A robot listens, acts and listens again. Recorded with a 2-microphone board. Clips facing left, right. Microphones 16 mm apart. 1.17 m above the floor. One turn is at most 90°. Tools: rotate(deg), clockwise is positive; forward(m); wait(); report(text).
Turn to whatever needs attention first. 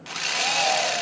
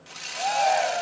rotate(30)
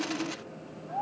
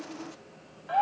rotate(90)
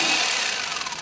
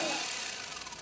rotate(35)
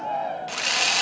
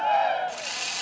rotate(45)
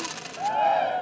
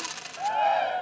rotate(10)
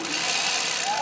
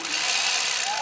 report("Found it: a shout, straight ahead.")